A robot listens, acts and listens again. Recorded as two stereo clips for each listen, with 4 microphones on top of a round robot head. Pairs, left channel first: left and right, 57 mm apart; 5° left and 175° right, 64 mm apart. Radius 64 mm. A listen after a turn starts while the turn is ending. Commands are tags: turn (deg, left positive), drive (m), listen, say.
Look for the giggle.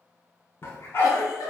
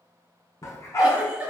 <turn deg="110"/>
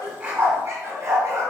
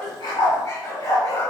<listen/>
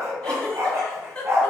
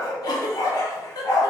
<turn deg="15"/>
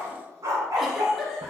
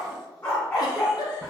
<say>Found it: a giggle, straight ahead, 1 to 2 m away.</say>